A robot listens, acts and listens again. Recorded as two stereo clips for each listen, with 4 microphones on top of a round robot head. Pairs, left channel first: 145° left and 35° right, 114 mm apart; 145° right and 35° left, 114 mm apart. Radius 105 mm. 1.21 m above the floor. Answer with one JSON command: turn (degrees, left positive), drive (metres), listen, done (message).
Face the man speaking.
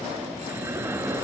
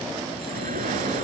{"listen": true}
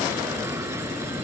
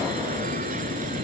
{"listen": true}
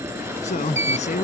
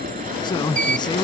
{"turn": 165}
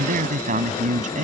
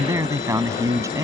{"turn": -30}
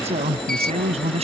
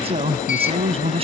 {"done": "Facing the man speaking."}